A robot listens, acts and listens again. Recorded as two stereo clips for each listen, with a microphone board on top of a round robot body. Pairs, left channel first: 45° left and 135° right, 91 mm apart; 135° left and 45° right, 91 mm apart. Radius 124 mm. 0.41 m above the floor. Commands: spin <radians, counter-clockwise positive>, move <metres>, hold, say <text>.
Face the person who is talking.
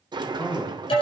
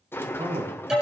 spin -0.35
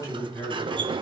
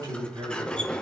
say Found it: a man speaking, straight ahead.